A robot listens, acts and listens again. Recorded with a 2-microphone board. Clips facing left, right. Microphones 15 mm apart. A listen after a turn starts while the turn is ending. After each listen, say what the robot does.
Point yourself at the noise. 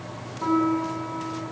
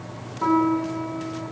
Turn 20° right.
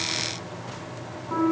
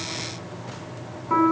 Turn 140° right.
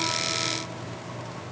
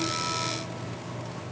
Keep listening.
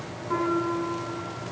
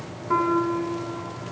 Turn 30° right.
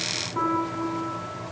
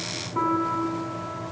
Turn 10° right.
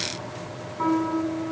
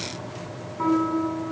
Facing the piano.